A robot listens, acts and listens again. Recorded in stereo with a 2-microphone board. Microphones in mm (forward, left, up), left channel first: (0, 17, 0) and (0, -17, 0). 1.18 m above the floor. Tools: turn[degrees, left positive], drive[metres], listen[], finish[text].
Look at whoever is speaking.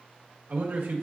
Action: turn[-90]
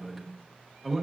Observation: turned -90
Action: finish[Facing the man speaking.]